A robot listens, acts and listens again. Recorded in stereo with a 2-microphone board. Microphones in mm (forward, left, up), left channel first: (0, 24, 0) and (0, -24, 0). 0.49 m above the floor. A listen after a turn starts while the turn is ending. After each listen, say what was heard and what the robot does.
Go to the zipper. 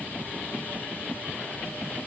Keep listening.
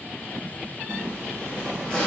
The zipper: about 25° left or 155° left. Turn 25° left.
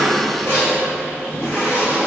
So it is at 130° left. Turn 130° left.
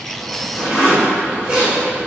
The zipper is now 15° right. Turn 15° right.
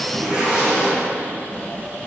Drive 1.0 m forward.
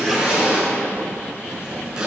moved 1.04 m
The zipper is now 15° right. Turn 15° right.
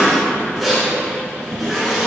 Drive 1.0 m forward.
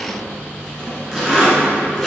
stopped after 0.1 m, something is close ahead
Arrived at the zipper, straight ahead.